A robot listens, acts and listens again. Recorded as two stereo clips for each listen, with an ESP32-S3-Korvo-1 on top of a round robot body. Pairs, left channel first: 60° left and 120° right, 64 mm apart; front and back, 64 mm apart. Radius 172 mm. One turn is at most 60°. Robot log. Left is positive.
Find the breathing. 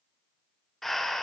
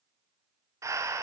note: The breathing: 145° left.
cmd yaw +60
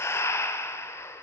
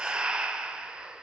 note: The breathing is now 105° left.
cmd yaw +60
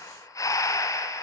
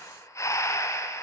note: The breathing is now 35° left.
cmd yaw +35
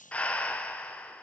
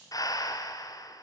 note: The breathing is now 10° right.
cmd yaw -10
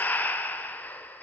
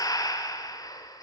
end: Facing the breathing.